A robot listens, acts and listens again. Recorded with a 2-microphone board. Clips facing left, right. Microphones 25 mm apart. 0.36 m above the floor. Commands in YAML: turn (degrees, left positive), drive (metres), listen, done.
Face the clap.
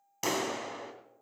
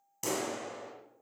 turn: 35
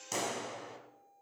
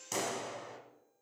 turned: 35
done: "Found it: a clap, straight ahead, 2 to 4 m away."